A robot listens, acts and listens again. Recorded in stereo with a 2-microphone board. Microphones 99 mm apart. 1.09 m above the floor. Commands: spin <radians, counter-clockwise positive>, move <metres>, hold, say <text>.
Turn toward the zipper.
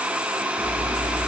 spin 0.52
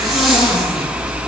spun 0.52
say Facing the zipper.